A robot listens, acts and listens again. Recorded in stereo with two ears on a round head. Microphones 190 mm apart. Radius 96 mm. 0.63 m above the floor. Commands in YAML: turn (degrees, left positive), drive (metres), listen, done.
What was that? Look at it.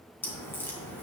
turn: 30
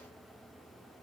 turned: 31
listen: true
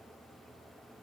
done: "I heard a crack, but can't make it out now. It was about 20° right or 140° left."